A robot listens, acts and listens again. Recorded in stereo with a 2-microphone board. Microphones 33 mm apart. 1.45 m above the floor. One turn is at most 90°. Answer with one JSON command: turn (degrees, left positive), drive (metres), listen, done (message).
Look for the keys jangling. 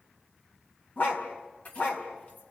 {"turn": 50}
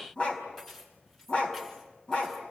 {"done": "Facing the keys jangling, over 4 m away."}